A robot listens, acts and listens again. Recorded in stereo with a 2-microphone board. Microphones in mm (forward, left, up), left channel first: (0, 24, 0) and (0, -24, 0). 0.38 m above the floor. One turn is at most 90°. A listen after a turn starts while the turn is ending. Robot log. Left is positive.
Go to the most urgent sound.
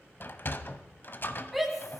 cmd yaw -30
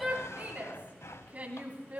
note: So it is at 145° right.
cmd yaw -90
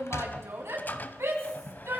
note: The shout is now 90° right.
cmd yaw -90
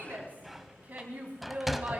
note: The shout is now 45° right.
cmd yaw -45
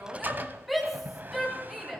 cmd fwd 1.0
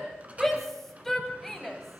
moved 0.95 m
note: The shout is now 10° left.
cmd yaw +10
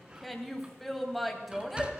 cmd fwd 1.0
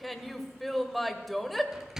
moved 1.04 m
cmd fwd 1.0
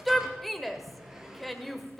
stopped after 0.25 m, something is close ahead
end: Arrived at the shout, straight ahead.